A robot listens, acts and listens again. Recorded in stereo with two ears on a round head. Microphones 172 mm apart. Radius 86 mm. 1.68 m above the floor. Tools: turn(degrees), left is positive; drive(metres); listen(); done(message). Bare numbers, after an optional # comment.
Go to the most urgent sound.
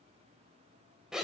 listen()
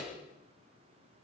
listen()
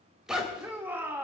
turn(-30)
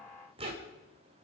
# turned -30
listen()
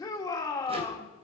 # So it is at 20° left.
turn(20)
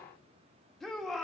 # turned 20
drive(1.0)
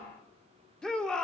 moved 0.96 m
drive(1.0)
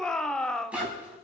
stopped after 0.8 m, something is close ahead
done("I am next to the shout.")